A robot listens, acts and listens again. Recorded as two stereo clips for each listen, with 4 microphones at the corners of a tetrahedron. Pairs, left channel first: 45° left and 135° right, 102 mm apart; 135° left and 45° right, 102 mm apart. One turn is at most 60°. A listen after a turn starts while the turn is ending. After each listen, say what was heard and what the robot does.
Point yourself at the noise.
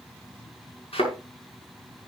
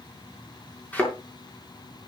The thud: 60° left. Turn 60° left.
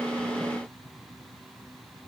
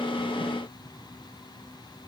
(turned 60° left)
Facing where the thud came from. I can't hear it now.